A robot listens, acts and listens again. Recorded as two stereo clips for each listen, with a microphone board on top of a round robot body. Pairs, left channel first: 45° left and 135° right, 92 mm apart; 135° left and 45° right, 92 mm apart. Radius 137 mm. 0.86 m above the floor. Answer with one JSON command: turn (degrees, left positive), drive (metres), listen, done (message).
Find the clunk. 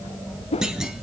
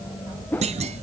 {"turn": -50}
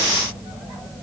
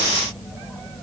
{"done": "I heard a clunk from this way, but can't make it out now."}